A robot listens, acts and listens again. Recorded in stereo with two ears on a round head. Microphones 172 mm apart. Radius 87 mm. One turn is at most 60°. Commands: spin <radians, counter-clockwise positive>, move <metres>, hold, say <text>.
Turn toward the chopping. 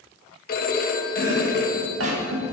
spin -1.05
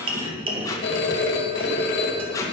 spin -0.52
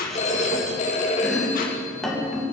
say Facing the chopping.